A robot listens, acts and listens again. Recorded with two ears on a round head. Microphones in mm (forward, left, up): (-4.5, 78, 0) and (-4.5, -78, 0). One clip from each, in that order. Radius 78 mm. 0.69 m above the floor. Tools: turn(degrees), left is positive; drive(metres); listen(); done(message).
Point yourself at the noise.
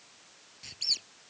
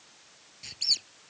turn(degrees=-30)
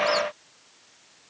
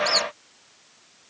listen()
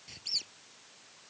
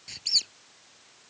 turn(degrees=-140)
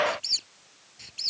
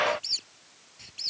turn(degrees=15)
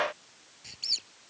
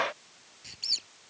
done("Facing the squeak.")